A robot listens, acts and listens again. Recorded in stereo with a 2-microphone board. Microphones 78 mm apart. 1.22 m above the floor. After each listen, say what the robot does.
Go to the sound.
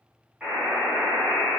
Turn 30° right.
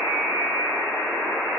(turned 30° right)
Turn 140° right.
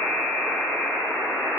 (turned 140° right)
Turn 15° left.
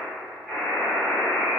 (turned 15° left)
Drive 1.0 m forward.
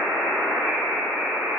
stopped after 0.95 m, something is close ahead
Turn 10° right.
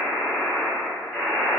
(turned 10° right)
Arrived at the buzzer, straight ahead.